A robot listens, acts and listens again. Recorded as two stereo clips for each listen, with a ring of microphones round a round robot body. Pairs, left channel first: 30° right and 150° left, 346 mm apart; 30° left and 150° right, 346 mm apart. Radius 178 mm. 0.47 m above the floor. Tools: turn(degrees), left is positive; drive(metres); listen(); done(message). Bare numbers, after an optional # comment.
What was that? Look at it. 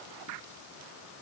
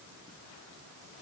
listen()
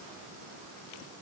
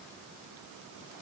listen()
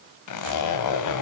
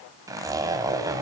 # The zipper: 70° right.
turn(-70)
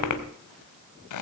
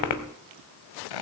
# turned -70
# The zipper is now 10° left.
turn(10)
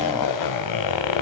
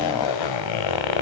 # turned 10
done("Found it: a zipper, straight ahead.")